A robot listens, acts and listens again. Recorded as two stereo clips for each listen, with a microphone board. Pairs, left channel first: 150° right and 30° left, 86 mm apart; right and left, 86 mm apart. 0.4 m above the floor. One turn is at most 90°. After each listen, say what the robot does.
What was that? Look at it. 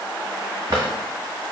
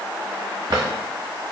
Turn 55° left.
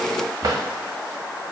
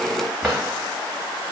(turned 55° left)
Facing the drawer, 1 to 2 m away.